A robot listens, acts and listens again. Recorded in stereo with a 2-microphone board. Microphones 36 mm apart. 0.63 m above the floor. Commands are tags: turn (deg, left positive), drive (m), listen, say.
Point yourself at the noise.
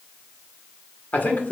<turn deg="50"/>
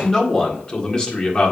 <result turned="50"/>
<turn deg="30"/>
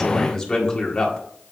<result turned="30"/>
<turn deg="25"/>
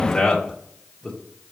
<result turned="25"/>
<turn deg="15"/>
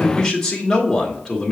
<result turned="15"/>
<turn deg="10"/>
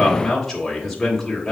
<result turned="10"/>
<say>Found it: a man speaking, straight ahead.</say>